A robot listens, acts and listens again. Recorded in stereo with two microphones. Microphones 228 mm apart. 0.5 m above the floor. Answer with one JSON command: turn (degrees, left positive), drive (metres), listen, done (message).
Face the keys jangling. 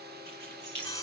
{"turn": -45}
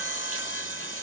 {"listen": true}
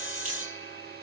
{"listen": true}
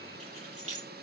{"turn": -85}
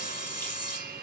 {"listen": true}
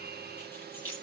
{"turn": 10}
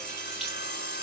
{"listen": true}
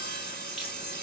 {"listen": true}
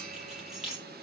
{"done": "Found it: keys jangling, straight ahead."}